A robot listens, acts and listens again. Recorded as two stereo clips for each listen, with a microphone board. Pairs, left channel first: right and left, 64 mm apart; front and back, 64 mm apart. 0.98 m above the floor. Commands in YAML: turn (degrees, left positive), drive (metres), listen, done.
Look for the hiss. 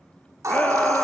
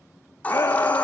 turn: 65
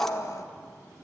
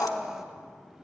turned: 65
done: "Facing the hiss, 1 to 2 m away."